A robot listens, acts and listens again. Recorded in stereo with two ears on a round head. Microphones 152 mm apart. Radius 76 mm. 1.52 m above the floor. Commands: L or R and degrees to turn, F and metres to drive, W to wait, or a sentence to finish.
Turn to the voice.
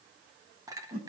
W
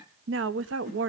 R90
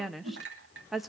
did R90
Found it: a woman speaking, straight ahead, 1 to 2 m away.